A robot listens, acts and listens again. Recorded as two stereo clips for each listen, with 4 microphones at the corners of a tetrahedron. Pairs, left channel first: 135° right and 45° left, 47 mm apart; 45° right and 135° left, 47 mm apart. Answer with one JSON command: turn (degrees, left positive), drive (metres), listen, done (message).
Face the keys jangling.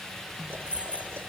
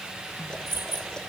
{"turn": 110}
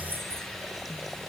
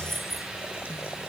{"turn": 50}
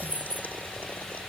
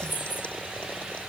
{"turn": -10}
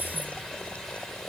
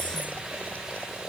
{"listen": true}
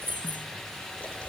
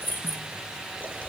{"done": "Found it: keys jangling, straight ahead."}